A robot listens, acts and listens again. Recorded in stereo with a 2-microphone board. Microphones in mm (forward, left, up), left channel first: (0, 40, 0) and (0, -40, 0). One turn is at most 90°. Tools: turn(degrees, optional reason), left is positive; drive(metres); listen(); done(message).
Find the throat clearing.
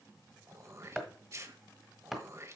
turn(degrees=-40, reason="The throat clearing: about 40° right or 140° right.")
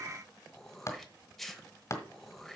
done("Found it: throat clearing, straight ahead, 1 to 2 m away.")